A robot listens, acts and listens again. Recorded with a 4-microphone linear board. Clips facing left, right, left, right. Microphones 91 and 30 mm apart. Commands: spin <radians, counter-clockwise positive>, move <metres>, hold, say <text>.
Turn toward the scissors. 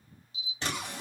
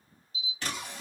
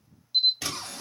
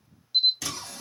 spin 0.52
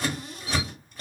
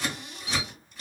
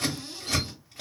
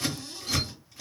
spin 2.01
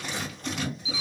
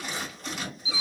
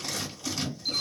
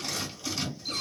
say Found it: scissors, straight ahead, 1 to 2 m away.